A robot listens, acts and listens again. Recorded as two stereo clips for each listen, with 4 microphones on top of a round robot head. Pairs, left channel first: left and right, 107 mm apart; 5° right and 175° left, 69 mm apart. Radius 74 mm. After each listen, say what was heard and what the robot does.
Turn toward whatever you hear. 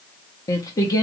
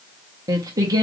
The singing: 145° left. Turn 145° left.
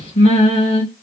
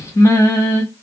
The singing is now 40° left. Turn 40° left.
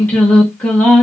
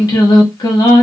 The singing is now 10° left. Turn 10° left.
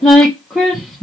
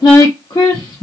Facing the singing.